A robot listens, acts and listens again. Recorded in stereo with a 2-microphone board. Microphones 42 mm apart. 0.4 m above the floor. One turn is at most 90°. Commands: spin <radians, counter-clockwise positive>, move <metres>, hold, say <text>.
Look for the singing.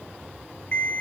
hold
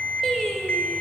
spin 0.26
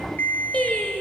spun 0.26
spin 0.61
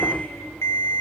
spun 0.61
hold
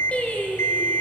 spin 0.52
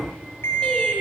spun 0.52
hold
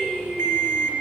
spin 0.44
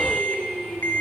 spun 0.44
say Found it: singing, straight ahead.